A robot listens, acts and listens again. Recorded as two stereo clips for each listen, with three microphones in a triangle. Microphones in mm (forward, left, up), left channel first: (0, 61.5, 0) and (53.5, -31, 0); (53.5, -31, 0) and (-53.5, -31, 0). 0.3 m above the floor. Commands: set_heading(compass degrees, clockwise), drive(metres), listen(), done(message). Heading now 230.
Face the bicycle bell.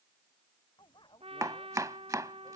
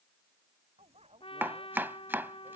set_heading(65)
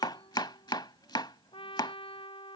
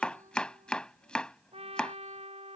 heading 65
listen()
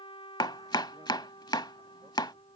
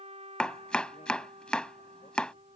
listen()
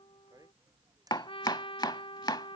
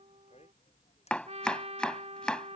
done("Facing the bicycle bell.")